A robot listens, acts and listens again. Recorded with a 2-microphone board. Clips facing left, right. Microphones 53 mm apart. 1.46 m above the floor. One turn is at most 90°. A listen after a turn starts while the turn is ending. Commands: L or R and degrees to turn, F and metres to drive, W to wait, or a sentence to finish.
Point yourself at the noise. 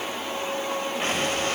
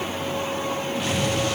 L35
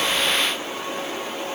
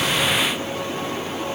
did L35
W
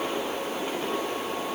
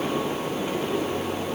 I heard an explosion, but can't make it out now. It was about straight ahead or 110° left.